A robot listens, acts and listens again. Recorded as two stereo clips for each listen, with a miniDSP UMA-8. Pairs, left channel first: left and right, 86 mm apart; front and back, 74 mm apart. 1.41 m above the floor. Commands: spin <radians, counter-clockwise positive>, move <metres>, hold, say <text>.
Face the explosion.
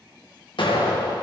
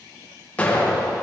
spin 1.22
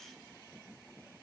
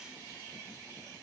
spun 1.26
say I heard an explosion from this way, but can't make it out now.